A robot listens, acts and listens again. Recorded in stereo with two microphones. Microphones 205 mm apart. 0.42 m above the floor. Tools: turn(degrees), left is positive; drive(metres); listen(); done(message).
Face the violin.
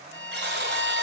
turn(degrees=75)
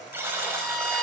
done("Found it: a violin, straight ahead.")